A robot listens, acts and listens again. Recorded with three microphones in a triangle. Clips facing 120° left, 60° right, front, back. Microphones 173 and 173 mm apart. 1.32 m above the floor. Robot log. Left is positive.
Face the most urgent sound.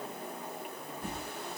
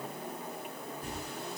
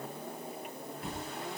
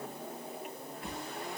cmd idle
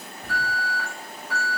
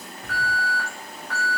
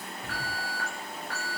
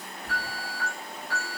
note: The alarm: 40° left.
cmd yaw +40
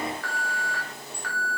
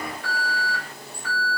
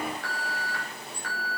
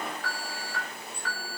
end: Facing the alarm.